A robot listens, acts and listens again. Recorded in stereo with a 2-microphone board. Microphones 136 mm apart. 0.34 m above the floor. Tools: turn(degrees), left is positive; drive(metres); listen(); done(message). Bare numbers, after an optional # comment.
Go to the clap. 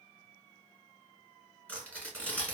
listen()
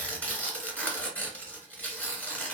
listen()
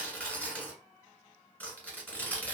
done("I can't make out a clap, only tearing paper.")